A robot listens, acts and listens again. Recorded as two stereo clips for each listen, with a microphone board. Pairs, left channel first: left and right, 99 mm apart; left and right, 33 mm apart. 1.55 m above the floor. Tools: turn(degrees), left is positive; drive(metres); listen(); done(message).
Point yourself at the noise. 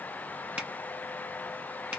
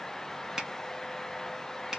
turn(degrees=-30)
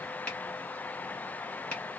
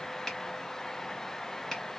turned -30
turn(degrees=15)
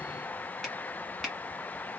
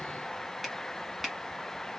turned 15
done("Found it: a finger snap, straight ahead.")